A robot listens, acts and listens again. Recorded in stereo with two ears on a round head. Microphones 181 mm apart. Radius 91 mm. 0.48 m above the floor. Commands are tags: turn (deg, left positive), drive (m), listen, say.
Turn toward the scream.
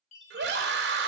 <turn deg="-55"/>
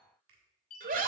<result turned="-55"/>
<turn deg="-50"/>
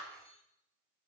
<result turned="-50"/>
<listen/>
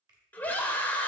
<turn deg="10"/>
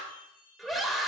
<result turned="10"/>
<say>Found it: a scream, straight ahead, 1 to 2 m away.</say>